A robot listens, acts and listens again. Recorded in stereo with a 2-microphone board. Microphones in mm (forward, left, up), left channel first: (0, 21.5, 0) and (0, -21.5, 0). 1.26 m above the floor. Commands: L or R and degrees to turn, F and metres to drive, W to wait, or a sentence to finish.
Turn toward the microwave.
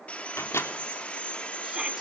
L90
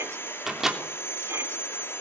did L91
Found it: a microwave, straight ahead.